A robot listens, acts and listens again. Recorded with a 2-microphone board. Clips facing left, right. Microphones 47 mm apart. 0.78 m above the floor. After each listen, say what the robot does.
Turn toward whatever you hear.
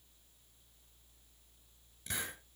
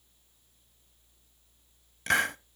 Turn 90° right.
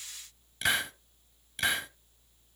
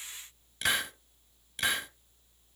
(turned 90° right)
Facing the hiss, 1 to 2 m away.